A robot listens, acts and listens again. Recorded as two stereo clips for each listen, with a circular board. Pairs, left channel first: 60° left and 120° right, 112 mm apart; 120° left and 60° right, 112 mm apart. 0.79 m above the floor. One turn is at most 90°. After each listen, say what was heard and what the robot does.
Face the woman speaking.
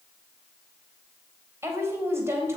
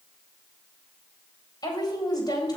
The woman speaking: 175° left. Turn 90° left.
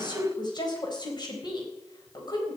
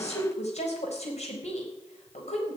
The woman speaking is now 110° left. Turn 90° left.
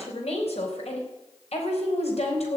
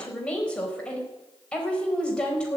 The woman speaking is now 40° left. Turn 40° left.
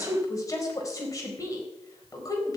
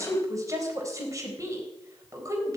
Found it: a woman speaking, straight ahead, over 4 m away.